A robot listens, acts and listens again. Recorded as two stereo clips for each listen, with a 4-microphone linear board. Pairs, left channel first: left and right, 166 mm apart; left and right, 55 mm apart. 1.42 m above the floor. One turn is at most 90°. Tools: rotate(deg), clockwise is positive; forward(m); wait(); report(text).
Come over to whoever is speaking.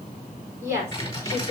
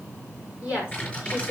rotate(20)
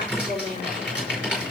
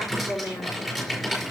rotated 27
rotate(90)
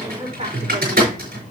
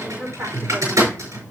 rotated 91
rotate(40)
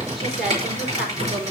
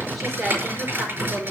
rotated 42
wait()
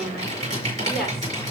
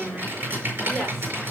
forward(1.0)
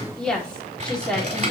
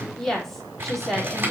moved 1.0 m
forward(1.0)
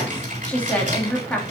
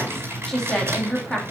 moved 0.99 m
rotate(-10)
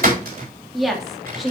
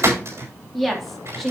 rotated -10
forward(1.0)
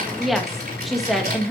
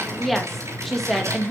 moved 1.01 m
forward(1.0)
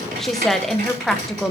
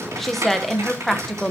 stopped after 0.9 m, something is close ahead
report("I am next to the woman speaking.")